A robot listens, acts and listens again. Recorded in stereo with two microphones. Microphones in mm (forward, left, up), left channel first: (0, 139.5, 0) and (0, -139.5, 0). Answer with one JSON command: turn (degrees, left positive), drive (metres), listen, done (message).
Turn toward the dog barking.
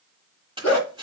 {"turn": 75}
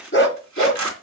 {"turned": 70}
{"turn": 45}
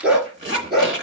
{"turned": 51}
{"done": "Found it: a dog barking, straight ahead, 2 to 4 m away."}